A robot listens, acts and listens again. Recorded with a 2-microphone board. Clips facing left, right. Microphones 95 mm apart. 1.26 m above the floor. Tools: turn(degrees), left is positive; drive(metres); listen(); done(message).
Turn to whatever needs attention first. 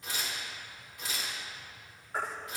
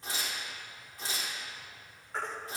turn(degrees=30)
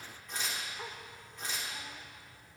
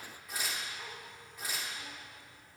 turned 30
listen()
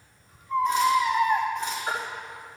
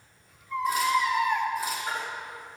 turn(degrees=140)
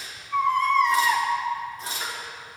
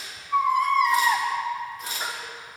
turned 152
turn(degrees=-10)
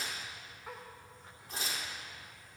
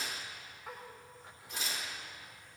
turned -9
listen()
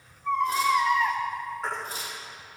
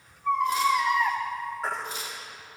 done("Found it: a baby crying, straight ahead.")